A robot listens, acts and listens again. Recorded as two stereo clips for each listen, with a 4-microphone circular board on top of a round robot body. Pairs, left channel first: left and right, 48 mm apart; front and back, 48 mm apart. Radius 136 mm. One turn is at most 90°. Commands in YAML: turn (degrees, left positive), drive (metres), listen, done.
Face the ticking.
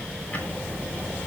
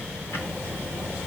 turn: 30
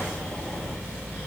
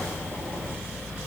turn: 10
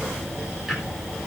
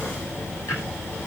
done: "Found it: ticking, straight ahead."